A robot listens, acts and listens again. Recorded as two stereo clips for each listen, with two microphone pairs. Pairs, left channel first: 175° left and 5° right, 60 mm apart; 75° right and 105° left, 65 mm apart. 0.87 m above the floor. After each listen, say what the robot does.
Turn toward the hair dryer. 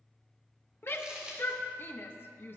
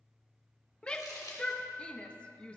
Keep listening.
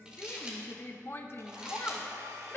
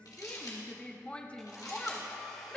Turn 15° left.
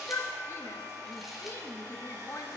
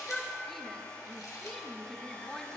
Facing the hair dryer, 2 to 4 m away.